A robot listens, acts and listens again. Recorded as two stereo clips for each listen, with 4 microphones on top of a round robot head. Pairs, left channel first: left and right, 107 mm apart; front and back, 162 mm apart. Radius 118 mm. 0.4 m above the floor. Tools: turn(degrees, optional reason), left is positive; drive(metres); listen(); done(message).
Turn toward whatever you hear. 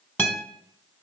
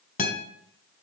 turn(degrees=20, reason="The guitar: 20° left.")
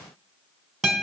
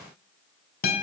done("Found it: a guitar, straight ahead.")